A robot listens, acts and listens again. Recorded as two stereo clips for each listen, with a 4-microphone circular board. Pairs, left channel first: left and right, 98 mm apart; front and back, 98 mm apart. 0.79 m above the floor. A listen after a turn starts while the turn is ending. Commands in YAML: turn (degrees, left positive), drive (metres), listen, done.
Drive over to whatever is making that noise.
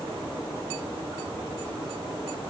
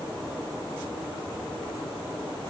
listen: true
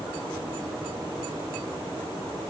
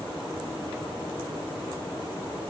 listen: true
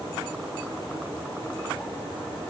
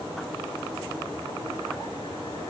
done: "I can't make out anything to turn to."